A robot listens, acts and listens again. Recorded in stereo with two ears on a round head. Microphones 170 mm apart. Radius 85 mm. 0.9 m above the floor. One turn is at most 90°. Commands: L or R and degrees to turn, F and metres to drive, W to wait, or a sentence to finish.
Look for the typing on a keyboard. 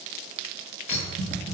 R45
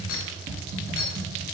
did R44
R85
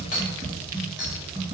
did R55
R30
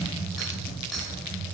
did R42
L10
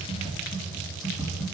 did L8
Found it: typing on a keyboard, straight ahead, 2 to 4 m away.